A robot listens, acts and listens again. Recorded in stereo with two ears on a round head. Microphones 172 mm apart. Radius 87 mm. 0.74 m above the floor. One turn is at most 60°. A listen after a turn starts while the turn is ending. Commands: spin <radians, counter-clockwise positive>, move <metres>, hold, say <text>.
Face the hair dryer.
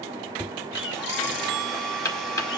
spin 0.52
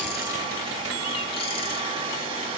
spin -0.44
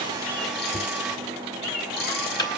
say Facing the hair dryer.